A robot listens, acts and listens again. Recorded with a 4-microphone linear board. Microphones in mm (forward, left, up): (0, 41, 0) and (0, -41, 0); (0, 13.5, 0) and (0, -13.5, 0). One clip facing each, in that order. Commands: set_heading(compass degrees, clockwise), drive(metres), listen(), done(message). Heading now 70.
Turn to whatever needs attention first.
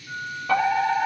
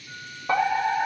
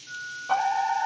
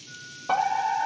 set_heading(95)
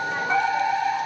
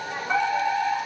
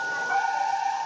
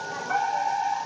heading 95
done("Found it: a fire alarm, straight ahead.")